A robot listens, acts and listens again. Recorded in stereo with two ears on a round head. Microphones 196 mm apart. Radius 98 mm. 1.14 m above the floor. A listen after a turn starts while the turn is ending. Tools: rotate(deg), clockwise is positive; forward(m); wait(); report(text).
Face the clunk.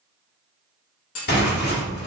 rotate(-75)
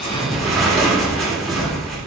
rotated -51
wait()
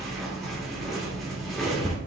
report("I heard a clunk, but can't make it out now. It was about 20° left or 55° left.")